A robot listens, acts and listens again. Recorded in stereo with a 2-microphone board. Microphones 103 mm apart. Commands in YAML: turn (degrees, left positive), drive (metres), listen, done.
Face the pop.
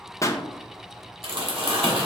turn: 35
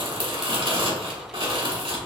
listen: true
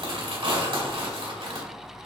done: "I heard a pop, but can't make it out now. It was about straight ahead or 110° left."